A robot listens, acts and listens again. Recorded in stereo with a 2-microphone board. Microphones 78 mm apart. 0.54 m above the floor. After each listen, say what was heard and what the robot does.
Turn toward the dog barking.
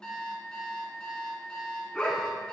Turn 30° left.
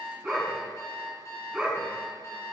So it is at 10° right. Turn 10° right.
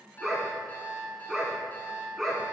Facing the dog barking.